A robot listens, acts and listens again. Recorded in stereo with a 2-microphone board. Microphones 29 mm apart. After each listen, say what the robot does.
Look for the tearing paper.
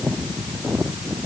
Keep listening.
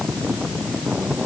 Keep listening.
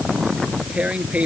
Turn 40° right.
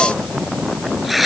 Facing the tearing paper.